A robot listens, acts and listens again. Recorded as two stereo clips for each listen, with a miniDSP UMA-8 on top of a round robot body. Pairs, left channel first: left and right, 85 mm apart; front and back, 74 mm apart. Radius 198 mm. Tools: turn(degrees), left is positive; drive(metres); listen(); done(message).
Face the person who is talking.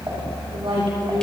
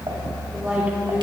turn(degrees=-110)
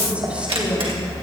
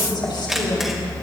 turn(degrees=-15)
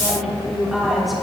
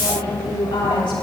done("Found it: a woman speaking, straight ahead, over 4 m away.")